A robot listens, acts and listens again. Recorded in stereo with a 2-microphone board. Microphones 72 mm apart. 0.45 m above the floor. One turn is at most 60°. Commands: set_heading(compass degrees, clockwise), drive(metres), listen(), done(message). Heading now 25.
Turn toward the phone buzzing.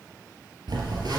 set_heading(85)
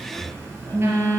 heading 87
set_heading(122)
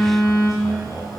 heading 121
done("Facing the phone buzzing.")